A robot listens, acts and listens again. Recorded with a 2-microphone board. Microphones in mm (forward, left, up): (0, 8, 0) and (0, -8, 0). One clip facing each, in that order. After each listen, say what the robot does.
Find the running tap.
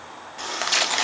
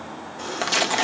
Turn 55° left.
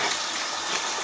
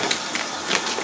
Facing the running tap.